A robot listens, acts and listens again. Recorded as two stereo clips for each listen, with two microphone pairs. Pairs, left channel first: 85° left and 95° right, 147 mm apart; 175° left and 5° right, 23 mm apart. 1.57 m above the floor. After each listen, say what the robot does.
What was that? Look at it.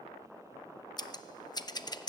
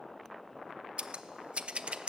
Turn 25° left.
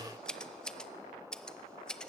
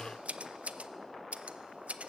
Facing the scissors, under 1 m away.